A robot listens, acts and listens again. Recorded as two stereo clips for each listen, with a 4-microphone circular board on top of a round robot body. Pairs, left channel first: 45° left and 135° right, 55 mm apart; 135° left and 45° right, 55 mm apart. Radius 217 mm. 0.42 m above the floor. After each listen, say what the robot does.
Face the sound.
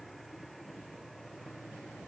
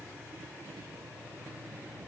Keep listening.
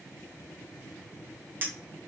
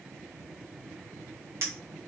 Turn 80° right.
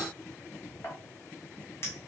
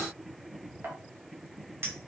Facing the clink, 1 to 2 m away.